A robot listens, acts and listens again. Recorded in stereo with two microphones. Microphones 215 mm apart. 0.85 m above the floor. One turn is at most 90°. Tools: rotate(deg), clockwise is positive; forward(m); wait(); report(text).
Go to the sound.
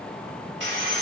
rotate(60)
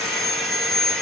forward(1.0)
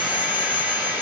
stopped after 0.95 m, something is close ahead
report("Arrived at the sawing, straight ahead.")